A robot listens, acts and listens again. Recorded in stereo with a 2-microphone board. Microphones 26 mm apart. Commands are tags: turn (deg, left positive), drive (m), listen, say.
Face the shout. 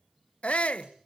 <turn deg="60"/>
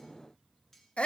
<turn deg="55"/>
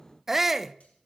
<turn deg="-15"/>
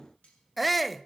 <say>Found it: a shout, straight ahead, under 1 m away.</say>